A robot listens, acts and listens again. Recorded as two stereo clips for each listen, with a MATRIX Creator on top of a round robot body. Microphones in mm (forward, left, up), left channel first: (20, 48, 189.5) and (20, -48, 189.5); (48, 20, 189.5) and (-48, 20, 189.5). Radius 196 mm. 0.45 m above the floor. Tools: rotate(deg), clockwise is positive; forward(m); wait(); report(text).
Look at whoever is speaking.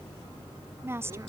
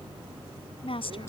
rotate(25)
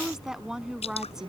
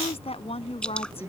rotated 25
report("Found it: a woman speaking, straight ahead.")